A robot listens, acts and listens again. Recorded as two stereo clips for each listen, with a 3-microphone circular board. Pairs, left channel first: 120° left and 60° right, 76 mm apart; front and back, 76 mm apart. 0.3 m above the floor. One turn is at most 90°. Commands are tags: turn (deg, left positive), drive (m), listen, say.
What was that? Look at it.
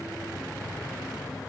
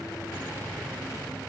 <listen/>
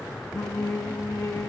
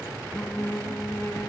<turn deg="60"/>
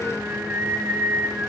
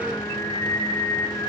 <say>Found it: singing, straight ahead, 2 to 4 m away.</say>